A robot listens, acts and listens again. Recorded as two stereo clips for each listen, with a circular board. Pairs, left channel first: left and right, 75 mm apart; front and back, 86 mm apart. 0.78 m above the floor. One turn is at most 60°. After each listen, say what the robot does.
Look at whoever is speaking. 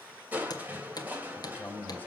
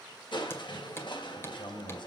Turn 25° left.
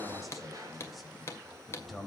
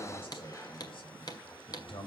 Found it: a man speaking, straight ahead.